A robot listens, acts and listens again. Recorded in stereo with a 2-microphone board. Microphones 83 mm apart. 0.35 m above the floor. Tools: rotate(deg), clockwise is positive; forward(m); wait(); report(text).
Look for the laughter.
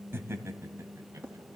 rotate(35)
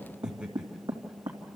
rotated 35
rotate(10)
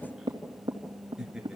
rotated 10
rotate(10)
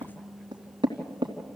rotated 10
wait()
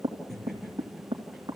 report("Facing the laughter, over 4 m away.")